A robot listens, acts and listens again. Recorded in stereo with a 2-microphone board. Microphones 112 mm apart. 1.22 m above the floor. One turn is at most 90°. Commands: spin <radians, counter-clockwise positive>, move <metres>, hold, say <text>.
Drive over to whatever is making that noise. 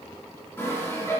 spin 0.35
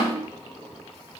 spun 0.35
hold
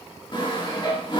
spin 1.57
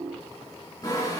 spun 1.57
spin 0.52
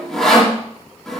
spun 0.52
move 1.0
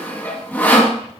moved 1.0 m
spin 0.26
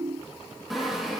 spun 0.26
move 1.0
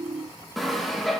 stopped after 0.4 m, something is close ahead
say Arrived at the sawing, straight ahead.